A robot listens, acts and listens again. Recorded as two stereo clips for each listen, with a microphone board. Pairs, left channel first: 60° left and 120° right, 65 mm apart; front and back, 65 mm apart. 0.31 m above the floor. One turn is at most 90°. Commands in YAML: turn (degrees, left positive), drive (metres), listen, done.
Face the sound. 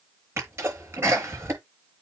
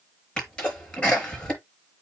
turn: -70
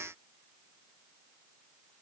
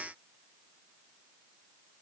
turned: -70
done: "I heard a sneeze from this way, but can't make it out now."